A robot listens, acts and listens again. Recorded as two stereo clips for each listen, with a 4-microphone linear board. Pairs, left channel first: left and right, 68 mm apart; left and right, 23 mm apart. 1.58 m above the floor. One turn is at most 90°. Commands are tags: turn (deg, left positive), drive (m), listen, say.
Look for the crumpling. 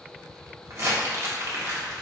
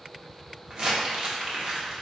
<turn deg="-45"/>
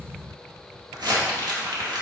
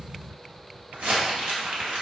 <turn deg="-90"/>
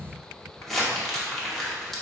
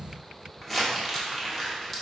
<say>Found it: crumpling, straight ahead, 1 to 2 m away.</say>